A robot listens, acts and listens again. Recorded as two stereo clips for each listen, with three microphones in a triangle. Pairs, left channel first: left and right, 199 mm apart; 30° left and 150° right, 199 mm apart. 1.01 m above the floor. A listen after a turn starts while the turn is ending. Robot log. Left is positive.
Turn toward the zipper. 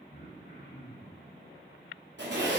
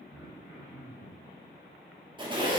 note: The zipper: 85° right.
cmd yaw -85
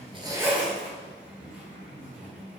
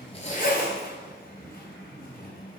note: The zipper is now 10° right.
cmd yaw -10
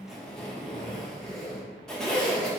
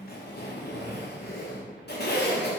end: Found it: a zipper, straight ahead.